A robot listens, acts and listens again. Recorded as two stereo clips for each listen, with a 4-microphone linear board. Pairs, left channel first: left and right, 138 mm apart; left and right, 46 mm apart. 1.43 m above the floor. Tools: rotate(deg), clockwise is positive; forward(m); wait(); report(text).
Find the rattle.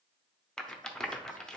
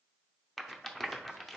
rotate(-30)
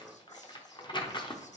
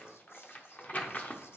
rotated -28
rotate(-145)
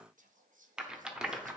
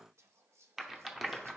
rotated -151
report("Facing the rattle.")